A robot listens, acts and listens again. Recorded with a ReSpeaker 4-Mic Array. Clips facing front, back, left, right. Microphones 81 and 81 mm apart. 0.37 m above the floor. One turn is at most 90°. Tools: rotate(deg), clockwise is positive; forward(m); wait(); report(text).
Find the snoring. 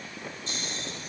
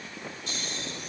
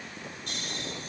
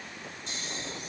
rotate(-60)
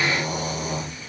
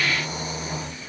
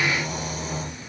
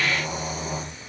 rotate(15)
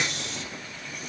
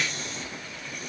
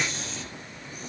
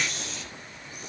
report("Found it: snoring, straight ahead, over 4 m away.")